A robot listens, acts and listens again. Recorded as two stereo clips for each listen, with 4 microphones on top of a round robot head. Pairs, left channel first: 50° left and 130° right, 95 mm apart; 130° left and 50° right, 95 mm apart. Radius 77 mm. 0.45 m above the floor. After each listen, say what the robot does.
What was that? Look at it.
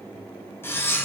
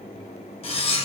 Turn 115° left.
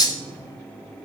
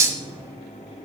Found it: cutlery clinking, straight ahead.